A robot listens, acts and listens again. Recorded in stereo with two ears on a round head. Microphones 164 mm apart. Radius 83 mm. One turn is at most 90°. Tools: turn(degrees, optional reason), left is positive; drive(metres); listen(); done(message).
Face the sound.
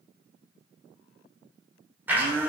turn(degrees=-30)
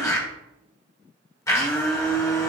turn(degrees=20, reason="So it is at 20° left.")
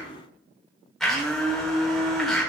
done("Facing the blender.")